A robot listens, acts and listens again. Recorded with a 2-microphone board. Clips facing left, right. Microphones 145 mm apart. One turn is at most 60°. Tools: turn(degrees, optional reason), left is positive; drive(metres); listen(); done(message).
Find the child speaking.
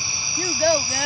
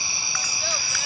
turn(degrees=60, reason="The child speaking: about 70° left or 110° left.")
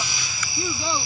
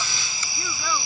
listen()
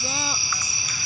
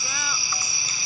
listen()
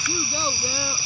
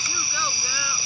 done("I heard a child speaking, but can't make it out now. It was about 10° left or 50° left.")